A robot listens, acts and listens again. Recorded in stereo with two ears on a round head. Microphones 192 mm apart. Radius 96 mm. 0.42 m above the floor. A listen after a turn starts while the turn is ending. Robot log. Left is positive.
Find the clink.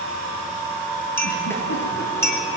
cmd yaw +30
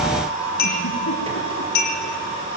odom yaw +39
note: So it is at 130° left.
cmd yaw +130
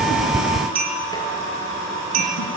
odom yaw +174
note: The clink is now 45° right.
cmd yaw -45
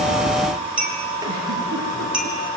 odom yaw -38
end: Facing the clink, over 4 m away.